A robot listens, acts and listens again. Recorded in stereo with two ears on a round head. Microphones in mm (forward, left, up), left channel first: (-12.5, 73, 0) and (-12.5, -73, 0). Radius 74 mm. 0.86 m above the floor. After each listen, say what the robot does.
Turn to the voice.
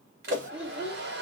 Turn 30° right.
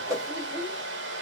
Turn 25° left.
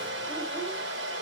Keep listening.
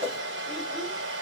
Keep listening.
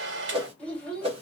Found it: a child speaking, straight ahead.